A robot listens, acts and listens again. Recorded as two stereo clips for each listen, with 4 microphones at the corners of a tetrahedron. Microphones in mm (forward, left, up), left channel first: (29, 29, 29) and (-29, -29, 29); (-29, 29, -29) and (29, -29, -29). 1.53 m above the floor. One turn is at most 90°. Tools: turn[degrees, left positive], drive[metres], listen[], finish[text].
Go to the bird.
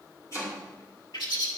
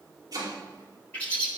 Thought: The bird: 60° left.
Action: turn[60]
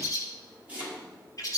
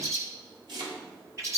Action: drive[1.0]
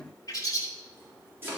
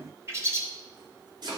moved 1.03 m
Action: drive[1.0]
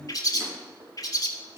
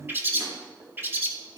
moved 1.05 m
Thought: The bird is now 15° left.
Action: turn[15]
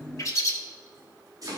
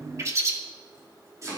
Action: drive[1.0]
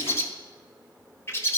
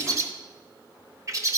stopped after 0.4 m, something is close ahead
Action: finish[I am next to the bird.]